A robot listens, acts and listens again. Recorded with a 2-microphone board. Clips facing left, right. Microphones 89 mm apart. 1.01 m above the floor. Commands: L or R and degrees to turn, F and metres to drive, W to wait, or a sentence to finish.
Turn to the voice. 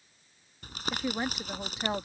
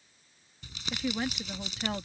L25
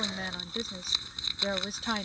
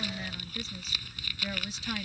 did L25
L135
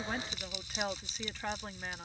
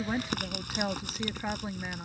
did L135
R10
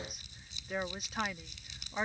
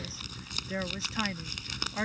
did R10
Facing the woman speaking.